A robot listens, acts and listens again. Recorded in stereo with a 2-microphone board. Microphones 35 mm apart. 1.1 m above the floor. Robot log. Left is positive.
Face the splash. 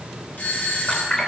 note: The splash: about 25° left or 155° left.
cmd yaw +25
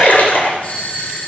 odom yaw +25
note: So it is at 130° left.
cmd yaw +130
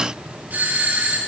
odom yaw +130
end: I heard a splash from this way, but can't make it out now.